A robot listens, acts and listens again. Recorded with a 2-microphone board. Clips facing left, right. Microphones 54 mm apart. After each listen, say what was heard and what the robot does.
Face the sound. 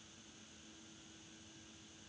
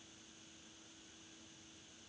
Keep listening.
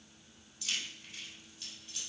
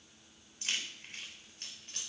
The keys jangling: about 45° right or 135° right. Turn 45° right.
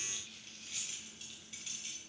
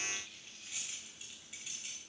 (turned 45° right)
So it is at 15° right. Turn 15° right.
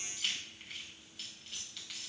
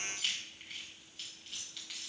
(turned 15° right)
Facing the keys jangling, 2 to 4 m away.